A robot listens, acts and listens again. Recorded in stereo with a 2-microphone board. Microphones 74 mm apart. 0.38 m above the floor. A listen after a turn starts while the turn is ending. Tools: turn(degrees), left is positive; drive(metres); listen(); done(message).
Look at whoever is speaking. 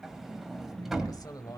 turn(degrees=55)
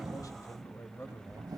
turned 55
turn(degrees=40)
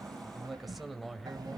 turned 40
done("Found it: a man speaking, straight ahead.")